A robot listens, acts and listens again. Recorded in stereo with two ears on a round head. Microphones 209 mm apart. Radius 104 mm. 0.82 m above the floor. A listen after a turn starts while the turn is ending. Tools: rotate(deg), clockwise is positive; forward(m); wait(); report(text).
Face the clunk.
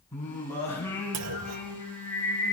rotate(90)
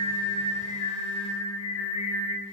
report("I heard a clunk from this way, but can't make it out now.")